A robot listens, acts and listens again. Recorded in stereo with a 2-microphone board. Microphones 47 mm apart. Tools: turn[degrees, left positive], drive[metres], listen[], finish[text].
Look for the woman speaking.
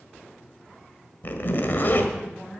Action: turn[30]
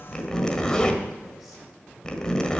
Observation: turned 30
Action: listen[]
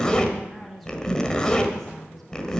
Action: turn[30]
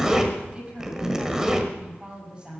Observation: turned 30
Thought: So it is at 20° right.
Action: turn[-20]
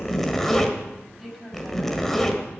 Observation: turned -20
Action: finish[Found it: a woman speaking, straight ahead, over 4 m away.]